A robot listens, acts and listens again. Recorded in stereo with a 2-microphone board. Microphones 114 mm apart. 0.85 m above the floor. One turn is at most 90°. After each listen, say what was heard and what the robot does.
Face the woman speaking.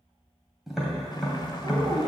The woman speaking: about 50° right or 130° right. Turn 50° right.
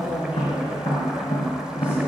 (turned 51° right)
So it is at 15° right. Turn 15° right.
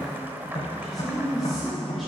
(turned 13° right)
Facing the woman speaking, 1 to 2 m away.